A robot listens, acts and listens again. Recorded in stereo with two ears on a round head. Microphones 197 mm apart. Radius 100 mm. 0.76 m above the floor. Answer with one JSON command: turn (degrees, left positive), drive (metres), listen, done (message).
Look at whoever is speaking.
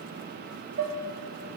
{"listen": true}
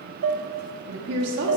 {"turn": -60}
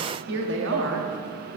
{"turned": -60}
{"turn": -65}
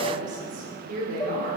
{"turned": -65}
{"turn": -40}
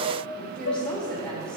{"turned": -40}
{"done": "Found it: a woman speaking, straight ahead."}